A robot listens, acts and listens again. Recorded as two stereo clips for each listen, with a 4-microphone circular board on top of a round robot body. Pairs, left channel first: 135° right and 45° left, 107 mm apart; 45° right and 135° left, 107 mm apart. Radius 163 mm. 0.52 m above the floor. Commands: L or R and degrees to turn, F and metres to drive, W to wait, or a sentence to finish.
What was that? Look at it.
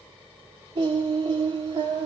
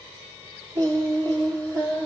L90
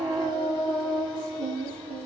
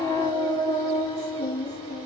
Found it: singing, straight ahead, over 4 m away.